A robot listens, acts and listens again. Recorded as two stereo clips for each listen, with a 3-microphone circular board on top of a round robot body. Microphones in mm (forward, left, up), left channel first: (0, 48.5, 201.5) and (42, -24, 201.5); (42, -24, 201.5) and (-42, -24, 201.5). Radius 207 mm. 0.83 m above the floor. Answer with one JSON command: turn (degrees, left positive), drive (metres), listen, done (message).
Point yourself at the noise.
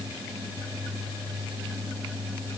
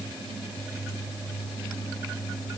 {"listen": true}
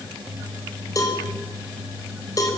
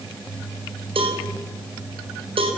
{"turn": 175}
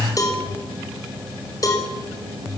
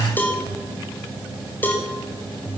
{"turn": 70}
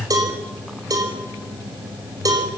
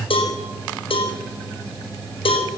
{"turn": -10}
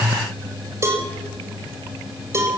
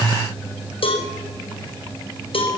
{"done": "Found it: a cowbell, straight ahead."}